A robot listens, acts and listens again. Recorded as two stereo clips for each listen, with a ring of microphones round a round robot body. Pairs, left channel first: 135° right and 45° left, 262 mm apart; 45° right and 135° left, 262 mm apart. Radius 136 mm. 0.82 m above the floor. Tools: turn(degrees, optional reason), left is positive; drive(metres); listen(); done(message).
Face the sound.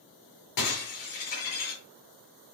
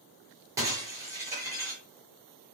turn(degrees=-145, reason="The breaking glass: 145° right.")
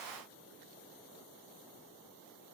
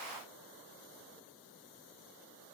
done("Facing where the breaking glass came from. I can't hear it now.")